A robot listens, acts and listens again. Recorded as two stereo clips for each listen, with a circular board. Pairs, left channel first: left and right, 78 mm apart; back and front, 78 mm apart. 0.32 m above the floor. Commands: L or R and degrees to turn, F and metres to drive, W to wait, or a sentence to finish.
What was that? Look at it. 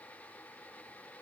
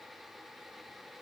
W
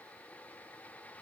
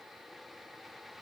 W
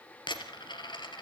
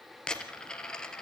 L100
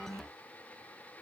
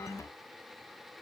I heard a dropped coin from this way, but can't make it out now.